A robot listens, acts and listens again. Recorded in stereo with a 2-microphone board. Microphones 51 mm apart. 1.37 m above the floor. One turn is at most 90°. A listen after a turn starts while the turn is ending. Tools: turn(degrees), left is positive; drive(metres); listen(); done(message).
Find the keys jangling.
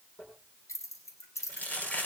turn(degrees=90)
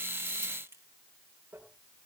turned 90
listen()
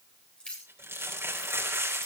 turn(degrees=20)
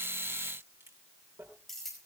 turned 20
done("Found it: keys jangling, straight ahead, over 4 m away.")